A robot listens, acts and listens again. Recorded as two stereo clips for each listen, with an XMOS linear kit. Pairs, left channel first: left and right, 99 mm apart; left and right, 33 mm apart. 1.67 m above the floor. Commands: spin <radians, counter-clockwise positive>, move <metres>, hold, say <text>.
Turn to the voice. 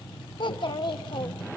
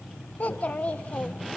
spin 1.05
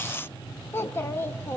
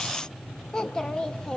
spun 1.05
spin 0.52
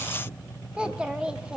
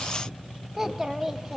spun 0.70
spin -0.17
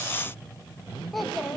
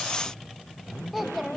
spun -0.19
say Found it: a child speaking, straight ahead, 1 to 2 m away.